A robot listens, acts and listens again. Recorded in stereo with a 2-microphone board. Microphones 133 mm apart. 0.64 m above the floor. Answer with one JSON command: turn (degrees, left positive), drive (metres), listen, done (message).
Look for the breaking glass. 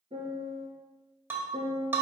{"turn": -15}
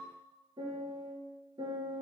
{"listen": true}
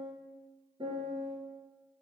{"done": "I heard breaking glass, but can't make it out now. It was about straight ahead or 150° right."}